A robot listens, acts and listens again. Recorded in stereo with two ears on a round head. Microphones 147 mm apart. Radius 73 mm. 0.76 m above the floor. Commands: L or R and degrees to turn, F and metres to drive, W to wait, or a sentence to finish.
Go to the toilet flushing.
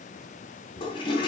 L30
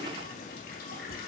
W
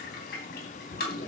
L115
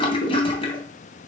L35
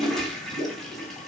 F1.0
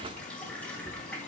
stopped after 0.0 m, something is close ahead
L10
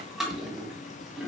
Blocked. The toilet flushing is further on, straight ahead.